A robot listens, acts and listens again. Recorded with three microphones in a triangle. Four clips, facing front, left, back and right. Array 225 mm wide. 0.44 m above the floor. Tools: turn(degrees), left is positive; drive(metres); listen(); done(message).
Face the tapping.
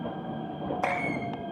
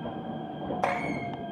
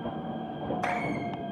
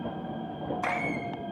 turn(degrees=65)
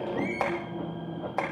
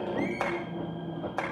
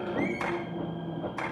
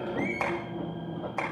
done("Found it: tapping, straight ahead, over 4 m away.")